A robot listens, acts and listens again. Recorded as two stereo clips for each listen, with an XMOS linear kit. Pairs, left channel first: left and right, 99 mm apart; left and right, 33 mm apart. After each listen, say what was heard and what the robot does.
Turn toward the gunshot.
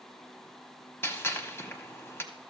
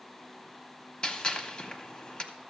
The gunshot: about 25° left or 155° left. Turn 25° left.
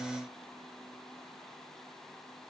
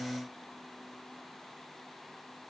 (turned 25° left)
Keep listening.
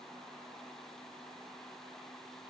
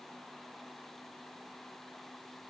I heard a gunshot, but can't make it out now. It was about straight ahead or 130° left.